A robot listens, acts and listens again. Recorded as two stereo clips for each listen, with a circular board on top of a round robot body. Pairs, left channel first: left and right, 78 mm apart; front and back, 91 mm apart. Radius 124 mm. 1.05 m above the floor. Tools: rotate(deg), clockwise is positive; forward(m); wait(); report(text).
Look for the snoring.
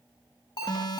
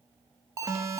wait()
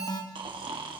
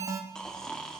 rotate(80)
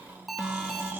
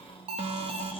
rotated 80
rotate(20)
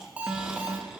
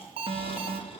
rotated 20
report("Facing the snoring, 1 to 2 m away.")